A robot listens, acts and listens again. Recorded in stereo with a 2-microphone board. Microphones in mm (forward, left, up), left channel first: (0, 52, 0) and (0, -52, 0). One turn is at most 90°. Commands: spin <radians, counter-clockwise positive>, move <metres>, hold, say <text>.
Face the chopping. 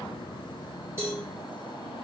hold
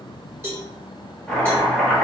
spin 0.52
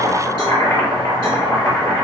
spin 1.57
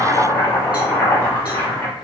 spin 0.61
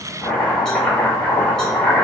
spin 0.17
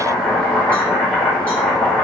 say Facing the chopping.